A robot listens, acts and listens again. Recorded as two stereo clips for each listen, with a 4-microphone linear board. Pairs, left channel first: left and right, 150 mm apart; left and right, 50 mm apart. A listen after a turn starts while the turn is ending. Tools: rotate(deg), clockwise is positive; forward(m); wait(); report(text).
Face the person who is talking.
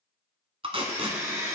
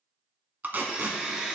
wait()
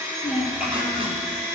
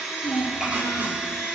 rotate(30)
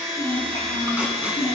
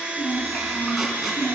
rotate(-20)
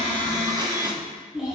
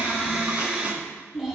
report("Found it: a child speaking, straight ahead, over 4 m away.")